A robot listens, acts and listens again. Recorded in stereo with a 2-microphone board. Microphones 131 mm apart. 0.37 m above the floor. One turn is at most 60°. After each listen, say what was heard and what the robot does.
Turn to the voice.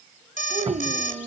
The child speaking: about 65° right or 115° right. Turn 60° right.
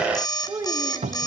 So it is at 30° right. Turn 30° right.
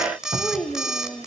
Found it: a child speaking, straight ahead.